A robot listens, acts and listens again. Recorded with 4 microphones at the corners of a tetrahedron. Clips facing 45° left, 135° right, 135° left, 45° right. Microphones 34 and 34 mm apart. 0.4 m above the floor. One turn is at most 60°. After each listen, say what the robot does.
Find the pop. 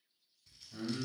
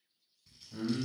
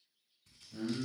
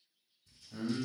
Keep listening.
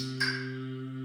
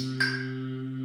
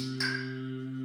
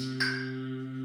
Turn 60° right.
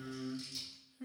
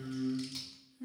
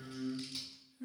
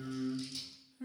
Turn 45° right.
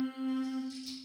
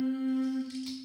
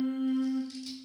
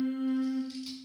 Facing where the pop came from. I can't hear it now.